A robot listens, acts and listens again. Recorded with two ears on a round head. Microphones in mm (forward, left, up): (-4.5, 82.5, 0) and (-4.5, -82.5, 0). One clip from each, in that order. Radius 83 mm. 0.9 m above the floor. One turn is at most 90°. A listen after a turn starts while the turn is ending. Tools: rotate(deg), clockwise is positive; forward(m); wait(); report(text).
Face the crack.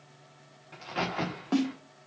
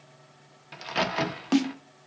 rotate(90)
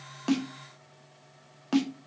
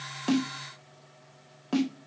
report("I heard a crack from this way, but can't make it out now.")